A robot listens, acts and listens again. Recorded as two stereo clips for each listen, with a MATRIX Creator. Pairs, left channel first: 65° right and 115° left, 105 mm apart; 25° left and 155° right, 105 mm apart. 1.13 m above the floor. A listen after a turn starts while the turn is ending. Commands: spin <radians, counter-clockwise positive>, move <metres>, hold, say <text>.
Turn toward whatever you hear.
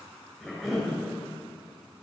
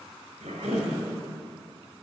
spin -2.79
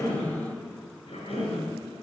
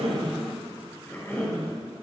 spin -0.87
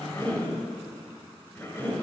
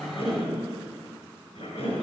say Facing the cough, over 4 m away.